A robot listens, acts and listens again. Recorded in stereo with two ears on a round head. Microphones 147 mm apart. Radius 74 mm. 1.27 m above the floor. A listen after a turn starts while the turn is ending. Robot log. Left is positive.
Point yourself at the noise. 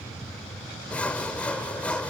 cmd yaw +30
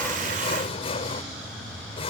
note: So it is at 140° left.
cmd yaw +140
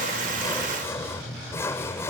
note: The sawing is now 15° left.
cmd yaw +15
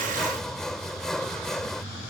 end: Facing the sawing.